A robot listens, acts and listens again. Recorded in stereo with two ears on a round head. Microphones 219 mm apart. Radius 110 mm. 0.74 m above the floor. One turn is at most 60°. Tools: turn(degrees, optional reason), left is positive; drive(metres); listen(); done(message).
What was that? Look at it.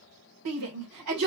turn(degrees=-60)
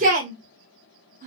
turn(degrees=-35, reason="So it is at 35° right.")
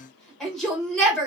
done("Facing the shout, 2 to 4 m away.")